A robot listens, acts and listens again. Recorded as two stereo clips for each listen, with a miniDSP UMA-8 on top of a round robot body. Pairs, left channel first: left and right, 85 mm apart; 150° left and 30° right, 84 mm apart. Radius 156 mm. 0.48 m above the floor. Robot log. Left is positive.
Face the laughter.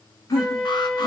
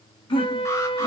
note: The laughter: 135° left.
cmd yaw +135
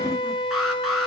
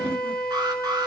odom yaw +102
note: Nothing new. It was at 35° left.
cmd yaw +35
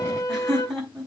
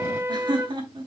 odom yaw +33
end: Found it: laughter, straight ahead, over 4 m away.